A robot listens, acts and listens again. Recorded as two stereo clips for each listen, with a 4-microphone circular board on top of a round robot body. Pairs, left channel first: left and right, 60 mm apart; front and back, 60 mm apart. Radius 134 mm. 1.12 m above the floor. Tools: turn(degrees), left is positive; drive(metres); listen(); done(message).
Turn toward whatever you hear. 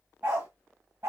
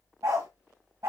turn(degrees=-135)
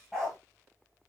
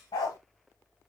turn(degrees=10)
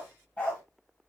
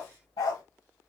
turn(degrees=20)
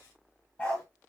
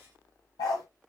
turn(degrees=20)
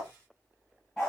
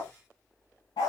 turn(degrees=15)
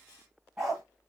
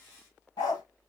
done("Found it: a dog barking, straight ahead.")